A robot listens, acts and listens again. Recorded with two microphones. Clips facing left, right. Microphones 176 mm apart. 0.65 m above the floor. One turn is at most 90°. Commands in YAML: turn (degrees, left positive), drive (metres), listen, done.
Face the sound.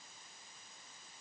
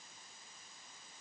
listen: true
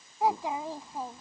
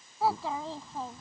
turn: 30
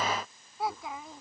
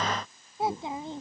turn: -30
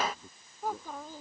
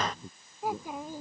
turn: -15
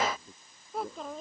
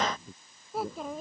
done: "Found it: a child speaking, straight ahead."